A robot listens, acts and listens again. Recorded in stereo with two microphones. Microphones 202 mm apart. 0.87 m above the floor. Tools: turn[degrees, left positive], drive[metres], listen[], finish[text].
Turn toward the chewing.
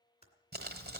Action: listen[]
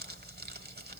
Action: listen[]
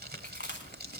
Thought: The chewing: about 60° left or 120° left.
Action: turn[60]
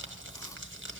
Action: listen[]
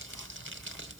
Action: listen[]
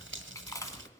Thought: So it is at 20° left.
Action: turn[20]
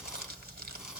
Action: listen[]
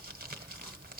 Action: listen[]
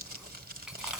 Action: finish[Facing where the chewing came from. I can't hear it now.]